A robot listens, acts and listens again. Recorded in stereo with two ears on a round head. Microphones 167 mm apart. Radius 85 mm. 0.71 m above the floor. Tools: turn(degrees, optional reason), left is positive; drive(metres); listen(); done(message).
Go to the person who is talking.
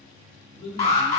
turn(degrees=70, reason="The man speaking: about 70° left or 110° left.")
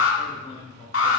turn(degrees=35, reason="So it is at 35° left.")
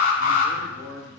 turn(degrees=10, reason="The man speaking is now 10° left.")
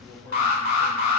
drive(metres=1.0)
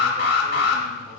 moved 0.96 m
listen()
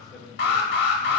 drive(metres=1.0)
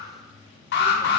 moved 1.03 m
listen()
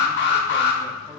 listen()
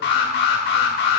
done("I heard a man speaking from this way, but can't make it out now. I did not reach it.")